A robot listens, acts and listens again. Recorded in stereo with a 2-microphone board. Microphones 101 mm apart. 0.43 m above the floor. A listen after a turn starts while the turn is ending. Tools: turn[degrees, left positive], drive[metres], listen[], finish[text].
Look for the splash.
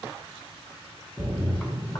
Action: turn[30]
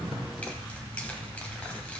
Action: listen[]
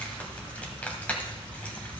Action: finish[I heard a splash, but can't make it out now. It was about 20° right or 140° left.]